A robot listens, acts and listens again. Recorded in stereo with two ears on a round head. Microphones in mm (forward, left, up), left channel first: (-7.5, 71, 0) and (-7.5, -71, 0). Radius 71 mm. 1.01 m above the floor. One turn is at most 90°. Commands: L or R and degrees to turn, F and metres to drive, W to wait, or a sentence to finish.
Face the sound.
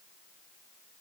W
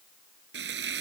R90
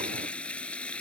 L10
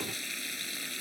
Facing the frying.